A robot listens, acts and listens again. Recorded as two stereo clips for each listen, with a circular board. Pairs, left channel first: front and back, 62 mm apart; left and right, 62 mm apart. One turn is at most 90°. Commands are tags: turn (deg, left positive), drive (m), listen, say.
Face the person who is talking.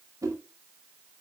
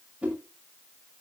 <listen/>
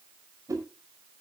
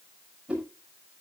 <listen/>
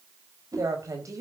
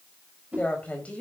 <turn deg="90"/>
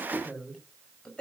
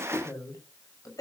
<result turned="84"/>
<turn deg="75"/>
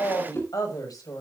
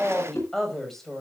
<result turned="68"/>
<say>Facing the woman speaking, over 4 m away.</say>